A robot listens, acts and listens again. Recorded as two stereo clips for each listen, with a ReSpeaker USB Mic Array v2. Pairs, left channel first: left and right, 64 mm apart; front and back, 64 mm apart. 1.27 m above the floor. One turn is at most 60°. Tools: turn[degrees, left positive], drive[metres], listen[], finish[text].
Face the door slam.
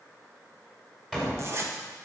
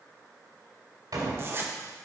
Thought: The door slam: 175° right.
Action: turn[-60]
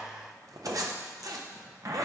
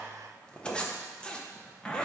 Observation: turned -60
Thought: Nothing new. It was at 115° right.
Action: turn[-60]
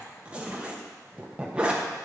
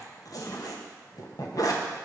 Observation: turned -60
Thought: Nothing new. It was at 55° right.
Action: turn[-55]
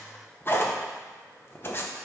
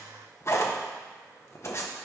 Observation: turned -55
Action: finish[Facing where the door slam came from. I can't hear it now.]